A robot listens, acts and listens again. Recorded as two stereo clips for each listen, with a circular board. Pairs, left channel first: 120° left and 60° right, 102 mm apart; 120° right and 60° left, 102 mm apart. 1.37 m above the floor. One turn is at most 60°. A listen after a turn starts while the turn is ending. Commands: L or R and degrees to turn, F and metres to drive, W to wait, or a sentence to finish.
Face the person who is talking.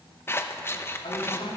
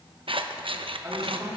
L60
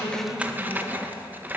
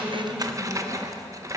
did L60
L55
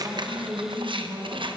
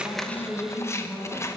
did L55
R20
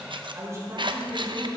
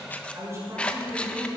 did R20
Found it: a man speaking, straight ahead.